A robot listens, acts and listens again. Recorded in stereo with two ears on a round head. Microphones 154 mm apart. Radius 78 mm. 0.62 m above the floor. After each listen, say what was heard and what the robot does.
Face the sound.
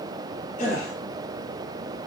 The gasp: about 50° left or 130° left. Turn 50° left.
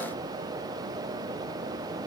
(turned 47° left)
Keep listening.
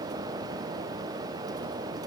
I heard a gasp, but can't make it out now. It was about 5° left or 80° left.